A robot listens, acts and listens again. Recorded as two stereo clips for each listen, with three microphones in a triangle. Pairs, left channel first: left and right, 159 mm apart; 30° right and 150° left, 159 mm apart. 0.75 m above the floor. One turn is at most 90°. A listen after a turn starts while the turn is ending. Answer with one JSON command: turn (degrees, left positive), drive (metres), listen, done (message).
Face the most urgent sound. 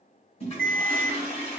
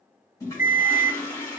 {"turn": 70}
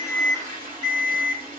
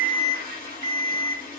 {"turn": -25}
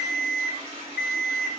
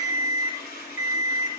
{"done": "Found it: an alarm, straight ahead."}